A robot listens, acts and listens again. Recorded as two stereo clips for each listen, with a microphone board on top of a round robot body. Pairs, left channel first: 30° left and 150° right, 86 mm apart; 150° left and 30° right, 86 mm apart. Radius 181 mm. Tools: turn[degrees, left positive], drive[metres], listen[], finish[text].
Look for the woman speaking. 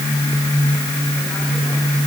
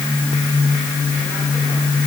Action: listen[]
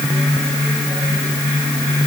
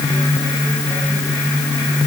Action: listen[]
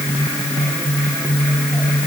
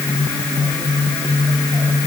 Action: finish[I can't make out a woman speaking to turn to.]